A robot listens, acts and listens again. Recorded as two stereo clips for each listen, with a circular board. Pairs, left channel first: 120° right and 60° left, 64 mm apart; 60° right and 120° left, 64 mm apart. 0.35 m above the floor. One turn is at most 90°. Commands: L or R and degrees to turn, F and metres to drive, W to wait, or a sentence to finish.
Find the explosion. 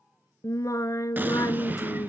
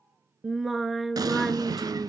L90
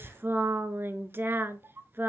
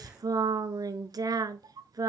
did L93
L25
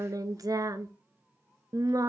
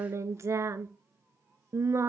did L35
R10
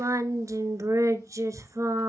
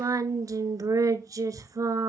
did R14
Facing where the explosion came from. I can't hear it now.